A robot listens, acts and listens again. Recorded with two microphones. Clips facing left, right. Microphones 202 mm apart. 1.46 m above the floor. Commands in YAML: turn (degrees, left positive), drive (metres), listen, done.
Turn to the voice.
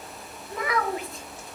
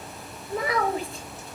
turn: -35
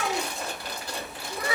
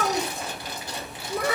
turn: -105
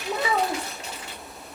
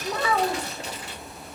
turn: 15
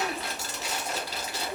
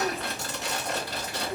done: "Facing the child speaking, 1 to 2 m away."